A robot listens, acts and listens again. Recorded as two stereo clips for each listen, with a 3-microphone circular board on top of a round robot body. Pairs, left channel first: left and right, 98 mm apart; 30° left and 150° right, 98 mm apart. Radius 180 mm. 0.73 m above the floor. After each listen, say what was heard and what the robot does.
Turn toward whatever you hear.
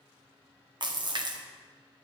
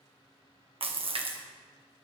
The splash: 130° right. Turn 130° right.
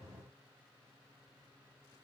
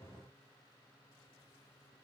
I heard a splash from this way, but can't make it out now.